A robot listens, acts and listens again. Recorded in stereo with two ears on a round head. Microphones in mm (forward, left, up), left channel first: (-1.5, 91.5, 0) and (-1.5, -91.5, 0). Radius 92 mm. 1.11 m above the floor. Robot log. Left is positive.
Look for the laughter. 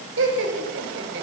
note: The laughter: about 60° right or 120° right.
cmd yaw -60
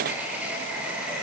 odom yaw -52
end: Facing the laughter.